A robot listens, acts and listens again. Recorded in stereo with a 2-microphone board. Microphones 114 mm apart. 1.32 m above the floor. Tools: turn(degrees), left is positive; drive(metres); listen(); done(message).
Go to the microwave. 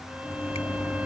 turn(degrees=20)
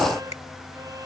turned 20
listen()
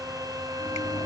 listen()
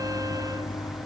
turn(degrees=140)
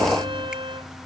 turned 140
listen()
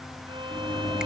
turn(degrees=40)
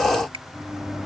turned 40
drive(metres=1.0)
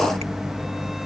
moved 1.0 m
drive(metres=1.0)
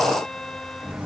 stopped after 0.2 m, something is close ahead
turn(degrees=-15)
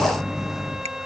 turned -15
done("Arrived at the microwave, straight ahead.")